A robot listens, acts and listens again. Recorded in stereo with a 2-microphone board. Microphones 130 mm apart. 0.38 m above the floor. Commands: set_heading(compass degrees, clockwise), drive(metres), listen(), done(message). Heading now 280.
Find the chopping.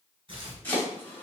set_heading(265)
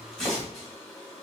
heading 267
done("Facing the chopping, 2 to 4 m away.")